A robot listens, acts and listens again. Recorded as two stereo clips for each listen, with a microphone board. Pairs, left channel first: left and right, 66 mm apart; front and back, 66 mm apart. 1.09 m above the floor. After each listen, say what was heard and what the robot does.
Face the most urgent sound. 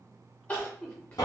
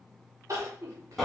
The crying: 150° left. Turn 150° left.
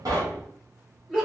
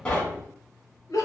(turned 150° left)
The crying is now 10° right. Turn 10° right.
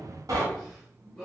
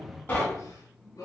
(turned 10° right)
Facing the crying.